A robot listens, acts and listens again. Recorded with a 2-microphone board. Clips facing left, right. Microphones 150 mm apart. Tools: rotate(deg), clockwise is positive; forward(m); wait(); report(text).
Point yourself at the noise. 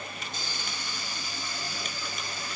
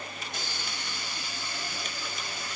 rotate(70)
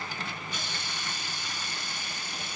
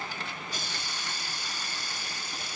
rotate(35)
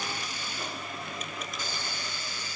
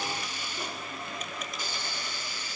rotate(10)
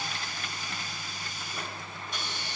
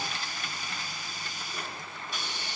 report("Facing the hiss, 2 to 4 m away.")